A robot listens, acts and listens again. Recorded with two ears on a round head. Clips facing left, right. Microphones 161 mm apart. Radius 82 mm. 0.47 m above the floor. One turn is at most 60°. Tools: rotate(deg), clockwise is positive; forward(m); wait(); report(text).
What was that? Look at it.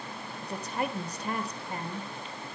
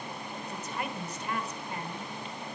rotate(-30)
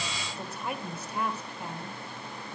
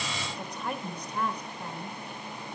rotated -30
report("Facing the woman speaking, 1 to 2 m away.")